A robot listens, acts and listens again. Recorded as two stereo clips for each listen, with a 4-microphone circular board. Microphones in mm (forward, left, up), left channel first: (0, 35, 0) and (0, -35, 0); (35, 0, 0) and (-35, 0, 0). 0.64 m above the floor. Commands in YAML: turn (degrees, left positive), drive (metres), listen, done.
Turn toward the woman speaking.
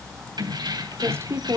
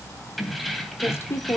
turn: -50
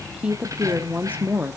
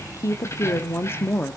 turn: -50
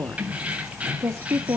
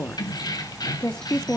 turn: -80
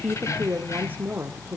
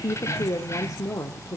turn: -30
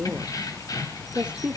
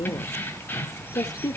turn: -20
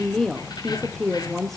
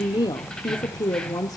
done: "Facing the woman speaking."